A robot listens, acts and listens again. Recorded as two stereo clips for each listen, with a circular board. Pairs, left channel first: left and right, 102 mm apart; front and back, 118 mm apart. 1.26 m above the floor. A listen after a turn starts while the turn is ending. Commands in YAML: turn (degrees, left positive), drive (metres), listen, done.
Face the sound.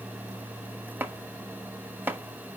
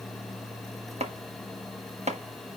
turn: -160
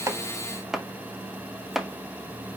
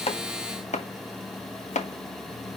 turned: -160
done: "Facing the chopping."